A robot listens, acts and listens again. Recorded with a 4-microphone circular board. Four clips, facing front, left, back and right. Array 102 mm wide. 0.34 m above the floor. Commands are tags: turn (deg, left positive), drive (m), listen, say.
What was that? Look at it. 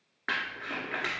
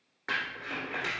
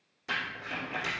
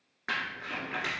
<say>Facing the crumpling, 1 to 2 m away.</say>